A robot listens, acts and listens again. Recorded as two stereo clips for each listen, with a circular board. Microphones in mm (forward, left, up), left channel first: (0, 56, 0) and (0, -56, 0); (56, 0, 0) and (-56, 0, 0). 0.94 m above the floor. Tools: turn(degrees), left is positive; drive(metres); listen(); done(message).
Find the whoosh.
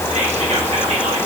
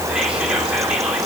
listen()
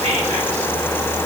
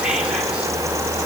listen()
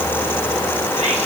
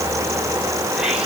done("I can't make out a whoosh to turn to.")